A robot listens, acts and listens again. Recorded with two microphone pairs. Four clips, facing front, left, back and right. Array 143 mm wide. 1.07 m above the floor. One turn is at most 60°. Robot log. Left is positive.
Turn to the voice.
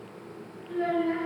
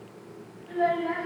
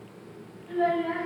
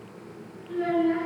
note: The child speaking: 110° left.
cmd yaw +60
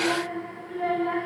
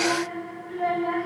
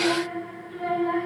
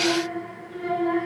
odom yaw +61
note: The child speaking is now 40° left.
cmd yaw +40
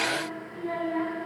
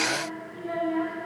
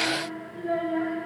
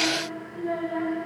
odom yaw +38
end: Found it: a child speaking, straight ahead, over 4 m away.